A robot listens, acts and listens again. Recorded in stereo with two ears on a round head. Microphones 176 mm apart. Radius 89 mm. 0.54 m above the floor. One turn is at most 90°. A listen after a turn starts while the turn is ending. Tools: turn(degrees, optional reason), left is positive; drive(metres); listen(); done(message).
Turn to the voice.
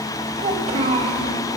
turn(degrees=-30, reason="The child speaking: about 30° right or 150° right.")
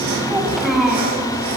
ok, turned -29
done("Facing the child speaking.")